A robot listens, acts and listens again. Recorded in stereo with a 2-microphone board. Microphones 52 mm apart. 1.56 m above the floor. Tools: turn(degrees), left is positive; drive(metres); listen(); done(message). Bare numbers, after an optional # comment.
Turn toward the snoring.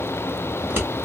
listen()
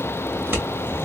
listen()
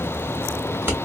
done("I can't make out snoring to turn to.")